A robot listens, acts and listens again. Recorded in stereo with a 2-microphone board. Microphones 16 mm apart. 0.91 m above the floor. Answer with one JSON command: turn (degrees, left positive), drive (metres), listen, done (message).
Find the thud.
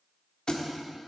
{"turn": 55}
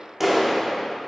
{"listen": true}
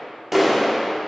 {"done": "I heard a thud, but can't make it out now. It was about straight ahead or 70° left."}